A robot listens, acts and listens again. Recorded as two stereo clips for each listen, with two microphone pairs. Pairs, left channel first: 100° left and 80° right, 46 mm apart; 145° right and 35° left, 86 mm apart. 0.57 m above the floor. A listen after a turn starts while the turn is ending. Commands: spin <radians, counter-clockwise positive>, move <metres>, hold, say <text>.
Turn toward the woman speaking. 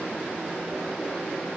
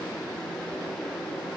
hold
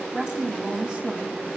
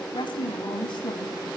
spin -2.53
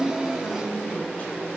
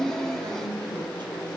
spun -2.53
hold
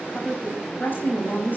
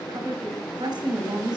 spin 0.96
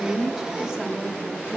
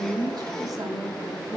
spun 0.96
say Found it: a woman speaking, straight ahead.